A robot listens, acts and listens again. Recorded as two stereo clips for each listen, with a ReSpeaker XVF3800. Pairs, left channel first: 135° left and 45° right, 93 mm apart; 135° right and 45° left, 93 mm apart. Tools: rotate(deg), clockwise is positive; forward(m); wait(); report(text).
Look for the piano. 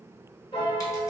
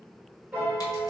rotate(-120)
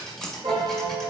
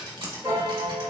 rotate(10)
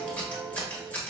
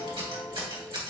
report("Found it: a piano, straight ahead.")